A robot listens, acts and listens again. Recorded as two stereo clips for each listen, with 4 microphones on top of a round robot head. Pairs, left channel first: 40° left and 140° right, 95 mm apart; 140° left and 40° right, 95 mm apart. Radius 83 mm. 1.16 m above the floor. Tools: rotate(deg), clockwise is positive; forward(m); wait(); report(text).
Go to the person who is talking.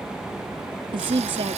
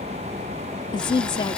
rotate(175)
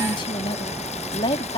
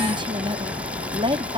forward(1.0)
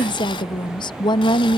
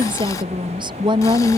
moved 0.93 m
forward(1.0)
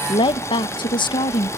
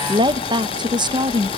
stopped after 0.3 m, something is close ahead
report("Arrived at the woman speaking, straight ahead.")